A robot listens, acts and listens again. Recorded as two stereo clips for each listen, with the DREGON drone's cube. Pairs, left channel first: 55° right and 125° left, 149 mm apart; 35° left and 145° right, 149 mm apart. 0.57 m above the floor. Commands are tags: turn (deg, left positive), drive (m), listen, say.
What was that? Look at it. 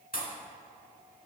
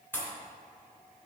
<turn deg="-40"/>
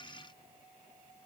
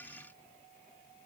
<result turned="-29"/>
<turn deg="-15"/>
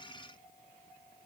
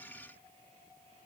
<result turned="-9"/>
<say>I heard a pop from this way, but can't make it out now.</say>